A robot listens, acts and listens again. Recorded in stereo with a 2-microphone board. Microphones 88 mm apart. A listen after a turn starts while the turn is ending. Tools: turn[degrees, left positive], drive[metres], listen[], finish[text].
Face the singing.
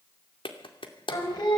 Thought: The singing: about 50° left or 130° left.
Action: turn[50]
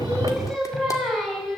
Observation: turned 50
Action: finish[Facing the singing, over 4 m away.]